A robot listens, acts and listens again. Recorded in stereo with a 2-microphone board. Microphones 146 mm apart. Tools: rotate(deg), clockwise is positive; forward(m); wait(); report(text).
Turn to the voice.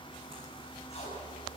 wait()
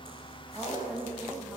rotate(30)
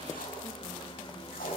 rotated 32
wait()
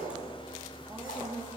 rotate(30)
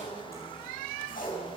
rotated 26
wait()
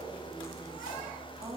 rotate(145)
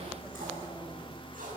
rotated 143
wait()
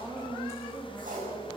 report("Facing the woman speaking, 2 to 4 m away.")